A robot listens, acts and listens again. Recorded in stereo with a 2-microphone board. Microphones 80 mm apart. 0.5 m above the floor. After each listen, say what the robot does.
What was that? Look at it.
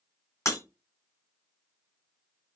Turn 40° left.
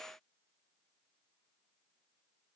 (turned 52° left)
Keep listening.
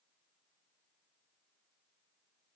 I heard breaking glass, but can't make it out now. It was about 15° right or 90° left.